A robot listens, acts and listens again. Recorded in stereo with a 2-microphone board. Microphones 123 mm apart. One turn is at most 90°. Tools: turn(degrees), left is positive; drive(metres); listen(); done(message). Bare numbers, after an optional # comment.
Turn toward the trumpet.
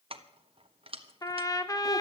# The trumpet: about 30° left or 150° left.
turn(30)
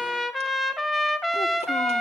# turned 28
done("Found it: a trumpet, straight ahead.")